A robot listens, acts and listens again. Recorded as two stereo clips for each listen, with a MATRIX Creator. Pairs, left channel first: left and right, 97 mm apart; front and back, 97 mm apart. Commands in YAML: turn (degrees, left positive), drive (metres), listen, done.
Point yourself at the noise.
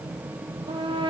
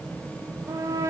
turn: -120
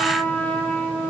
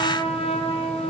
turn: 15
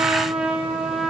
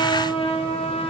done: "Found it: a trumpet, straight ahead."